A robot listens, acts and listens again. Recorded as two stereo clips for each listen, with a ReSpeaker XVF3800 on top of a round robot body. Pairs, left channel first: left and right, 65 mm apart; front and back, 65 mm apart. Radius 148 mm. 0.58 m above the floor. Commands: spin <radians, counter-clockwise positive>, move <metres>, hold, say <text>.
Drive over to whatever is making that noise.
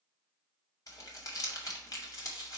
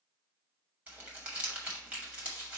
spin 2.01
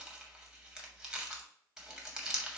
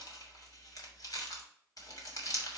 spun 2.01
spin -0.17
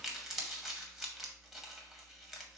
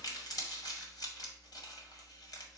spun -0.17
move 1.0
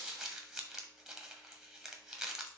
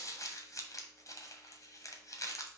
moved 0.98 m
move 1.0
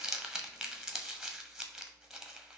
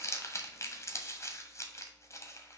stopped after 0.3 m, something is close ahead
say I am next to the crumpling.